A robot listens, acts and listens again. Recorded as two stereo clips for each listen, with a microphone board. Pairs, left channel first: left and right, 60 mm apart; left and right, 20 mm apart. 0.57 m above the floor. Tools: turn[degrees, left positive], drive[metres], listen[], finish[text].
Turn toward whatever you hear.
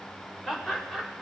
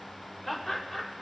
Action: turn[30]
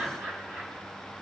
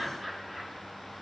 Thought: So it is at 35° right.
Action: turn[-35]
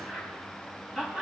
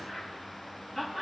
Action: finish[Facing the laughter, over 4 m away.]